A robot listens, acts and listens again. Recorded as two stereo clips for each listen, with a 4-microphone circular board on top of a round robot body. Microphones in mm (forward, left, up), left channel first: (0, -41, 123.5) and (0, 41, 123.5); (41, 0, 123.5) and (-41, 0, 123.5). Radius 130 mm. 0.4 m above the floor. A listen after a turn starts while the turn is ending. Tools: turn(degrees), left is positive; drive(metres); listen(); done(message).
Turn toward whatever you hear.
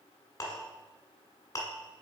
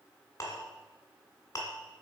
turn(degrees=-45)
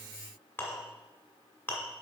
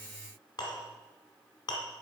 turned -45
turn(degrees=-25)
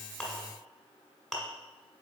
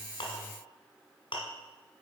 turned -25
done("Facing the clink.")